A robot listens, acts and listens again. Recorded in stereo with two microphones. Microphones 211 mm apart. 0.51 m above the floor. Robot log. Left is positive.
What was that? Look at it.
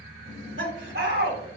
note: The laughter: about 65° right or 115° right.
cmd yaw -65
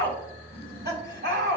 note: So it is at 55° right.
cmd yaw -55
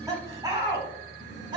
note: The laughter is now 20° right.
cmd yaw -20
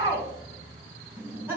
note: The laughter is now 10° right.
cmd yaw -10
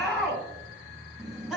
end: Facing the laughter.